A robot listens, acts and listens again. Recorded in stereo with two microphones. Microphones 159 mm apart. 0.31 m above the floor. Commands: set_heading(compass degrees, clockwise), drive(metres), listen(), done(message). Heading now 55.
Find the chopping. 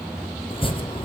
set_heading(20)
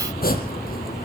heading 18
set_heading(268)
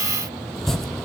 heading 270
done("Facing the chopping, 2 to 4 m away.")